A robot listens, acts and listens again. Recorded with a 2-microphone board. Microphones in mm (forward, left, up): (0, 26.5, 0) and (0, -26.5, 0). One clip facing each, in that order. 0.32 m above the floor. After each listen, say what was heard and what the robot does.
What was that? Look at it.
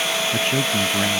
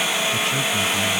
The man speaking: about 35° left or 145° left. Turn 35° left.
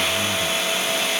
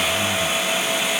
Found it: a man speaking, straight ahead.